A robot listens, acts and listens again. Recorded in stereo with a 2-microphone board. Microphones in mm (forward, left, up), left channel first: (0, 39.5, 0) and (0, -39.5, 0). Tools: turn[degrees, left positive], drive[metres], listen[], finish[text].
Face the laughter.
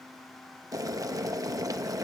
Action: listen[]
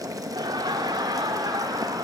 Thought: The laughter: about 65° right or 115° right.
Action: turn[-65]
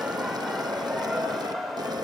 Action: finish[Found it: laughter, straight ahead.]